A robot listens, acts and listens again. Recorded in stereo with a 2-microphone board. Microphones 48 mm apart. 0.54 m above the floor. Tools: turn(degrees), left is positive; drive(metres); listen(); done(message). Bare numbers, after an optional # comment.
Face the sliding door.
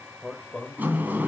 # The sliding door: about 35° right or 145° right.
turn(-35)
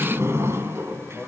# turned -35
# So it is at 110° right.
turn(-110)
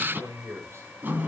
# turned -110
# The sliding door is now 45° right.
turn(-45)
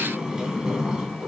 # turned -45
# The sliding door is now 15° right.
turn(-15)
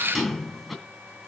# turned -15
done("Facing the sliding door, 2 to 4 m away.")